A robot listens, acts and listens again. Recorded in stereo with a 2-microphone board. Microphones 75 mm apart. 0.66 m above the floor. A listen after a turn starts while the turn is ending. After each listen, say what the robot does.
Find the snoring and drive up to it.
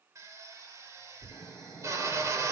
Turn 30° left.
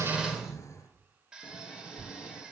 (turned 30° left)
Turn 140° left.
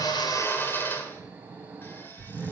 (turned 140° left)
Turn 20° right.
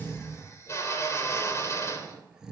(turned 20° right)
Turn 10° right.
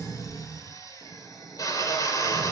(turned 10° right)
Drive 1.0 m forward.
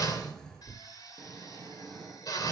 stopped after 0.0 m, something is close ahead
Something is in my way. I am facing the snoring but have not reached it.